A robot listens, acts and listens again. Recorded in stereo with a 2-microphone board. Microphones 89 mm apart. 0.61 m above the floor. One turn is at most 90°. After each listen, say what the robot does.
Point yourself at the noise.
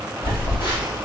Turn 70° left.
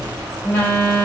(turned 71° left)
Turn 25° left.
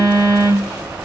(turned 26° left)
Facing the phone buzzing, 1 to 2 m away.